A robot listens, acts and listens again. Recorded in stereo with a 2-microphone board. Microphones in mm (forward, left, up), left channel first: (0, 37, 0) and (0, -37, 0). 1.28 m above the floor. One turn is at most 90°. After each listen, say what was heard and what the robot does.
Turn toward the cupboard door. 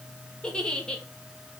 Keep listening.
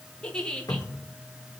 The cupboard door: about 55° left or 125° left. Turn 55° left.
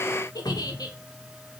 So it is at 70° left. Turn 70° left.
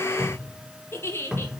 The cupboard door is now 10° right. Turn 10° right.
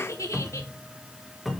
Found it: a cupboard door, straight ahead, 1 to 2 m away.